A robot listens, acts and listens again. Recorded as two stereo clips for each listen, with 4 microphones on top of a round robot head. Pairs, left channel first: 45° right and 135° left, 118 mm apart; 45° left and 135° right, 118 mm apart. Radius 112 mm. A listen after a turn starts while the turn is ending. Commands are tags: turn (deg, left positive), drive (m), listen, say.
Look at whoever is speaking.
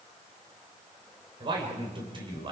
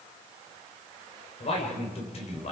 <turn deg="85"/>
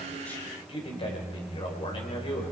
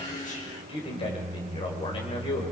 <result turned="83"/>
<say>Found it: a man speaking, straight ahead.</say>